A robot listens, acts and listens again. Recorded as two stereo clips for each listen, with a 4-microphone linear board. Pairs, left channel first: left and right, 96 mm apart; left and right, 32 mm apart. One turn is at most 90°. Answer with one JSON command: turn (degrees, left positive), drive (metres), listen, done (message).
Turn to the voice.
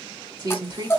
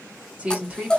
{"turn": -50}
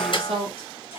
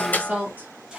{"turn": -85}
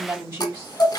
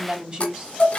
{"turn": -25}
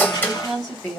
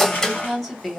{"done": "Found it: a woman speaking, straight ahead, 2 to 4 m away."}